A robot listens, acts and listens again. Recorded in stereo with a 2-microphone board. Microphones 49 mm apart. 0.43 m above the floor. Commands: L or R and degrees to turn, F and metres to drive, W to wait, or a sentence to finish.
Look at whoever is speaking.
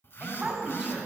R30
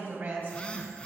R140
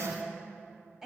R10
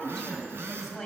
Facing the woman speaking, 2 to 4 m away.